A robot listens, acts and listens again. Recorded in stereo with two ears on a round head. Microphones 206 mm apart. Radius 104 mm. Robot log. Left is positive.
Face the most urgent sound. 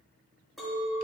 cmd idle
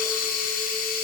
cmd idle
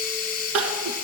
note: The crying: about 70° right or 110° right.
cmd yaw -70
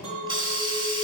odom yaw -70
cmd idle
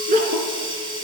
note: So it is at 35° right.
cmd yaw -35
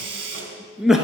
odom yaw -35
end: Facing the crying, 1 to 2 m away.